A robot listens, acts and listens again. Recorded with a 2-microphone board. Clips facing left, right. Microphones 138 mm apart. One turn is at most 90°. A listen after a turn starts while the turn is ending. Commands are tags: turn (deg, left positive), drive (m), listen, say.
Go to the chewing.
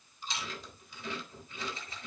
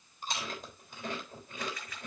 <turn deg="-45"/>
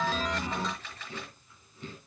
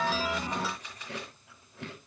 <turn deg="-90"/>
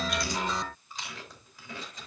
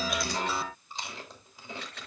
<turn deg="-30"/>
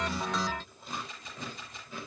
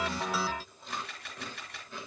<drive m="1.0"/>
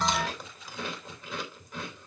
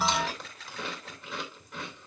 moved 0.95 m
<drive m="1.0"/>
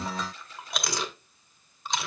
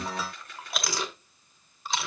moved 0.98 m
<drive m="1.0"/>
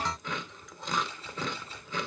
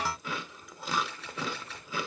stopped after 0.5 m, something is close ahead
<say>Arrived at the chewing, straight ahead.</say>